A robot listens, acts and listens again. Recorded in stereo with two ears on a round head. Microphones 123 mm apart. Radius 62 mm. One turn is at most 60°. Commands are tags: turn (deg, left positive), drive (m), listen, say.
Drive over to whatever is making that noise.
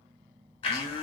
<turn deg="40"/>
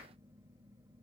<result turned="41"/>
<listen/>
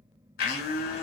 <turn deg="60"/>
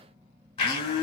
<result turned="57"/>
<turn deg="40"/>
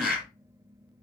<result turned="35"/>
<drive m="1.0"/>
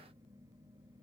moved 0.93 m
<listen/>
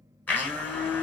<turn deg="15"/>
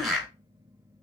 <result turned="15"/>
<drive m="1.0"/>
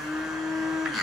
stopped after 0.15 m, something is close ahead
<say>Arrived at the blender, straight ahead.</say>